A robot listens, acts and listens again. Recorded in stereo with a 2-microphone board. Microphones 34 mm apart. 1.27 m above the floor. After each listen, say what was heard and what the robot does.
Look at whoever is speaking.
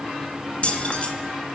Keep listening.
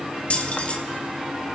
Keep listening.
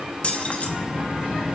Turn 30° right.
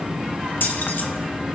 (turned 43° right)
So it is at 130° right. Turn 130° right.
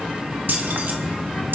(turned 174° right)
The child speaking is now 45° left. Turn 45° left.
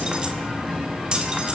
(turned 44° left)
Found it: a child speaking, straight ahead.